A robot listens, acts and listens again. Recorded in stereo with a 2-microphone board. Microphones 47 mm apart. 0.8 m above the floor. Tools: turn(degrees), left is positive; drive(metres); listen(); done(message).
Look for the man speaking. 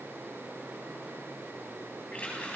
listen()
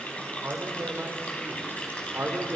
turn(degrees=-65)
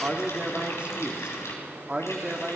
turn(degrees=-25)
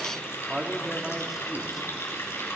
done("Facing the man speaking, 1 to 2 m away.")